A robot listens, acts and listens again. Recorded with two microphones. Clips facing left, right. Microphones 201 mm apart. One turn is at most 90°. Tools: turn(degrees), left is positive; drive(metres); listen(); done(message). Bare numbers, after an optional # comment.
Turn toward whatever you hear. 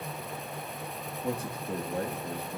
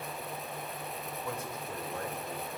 # The man speaking: about 35° left or 145° left.
turn(35)
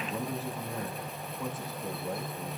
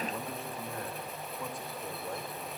done("Found it: a man speaking, straight ahead.")